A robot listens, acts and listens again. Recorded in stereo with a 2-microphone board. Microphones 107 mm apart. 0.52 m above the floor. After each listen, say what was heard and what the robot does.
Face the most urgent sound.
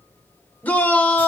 The shout: about 15° left or 165° left. Turn 15° left.
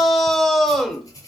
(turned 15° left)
Found it: a shout, straight ahead, 1 to 2 m away.